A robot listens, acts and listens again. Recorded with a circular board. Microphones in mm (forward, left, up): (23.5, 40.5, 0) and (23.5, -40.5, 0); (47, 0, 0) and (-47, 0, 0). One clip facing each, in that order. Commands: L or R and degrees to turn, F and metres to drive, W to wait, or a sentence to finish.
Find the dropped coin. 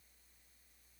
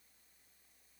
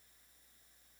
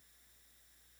W
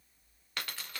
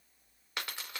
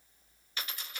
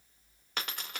R160
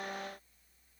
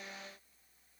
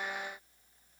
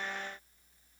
I heard a dropped coin from this way, but can't make it out now.